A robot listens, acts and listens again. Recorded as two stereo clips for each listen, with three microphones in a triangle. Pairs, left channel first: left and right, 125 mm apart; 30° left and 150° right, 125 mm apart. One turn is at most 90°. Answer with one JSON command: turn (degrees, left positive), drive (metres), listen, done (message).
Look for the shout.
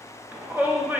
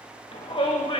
{"turn": -15}
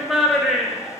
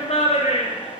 {"done": "Facing the shout, under 1 m away."}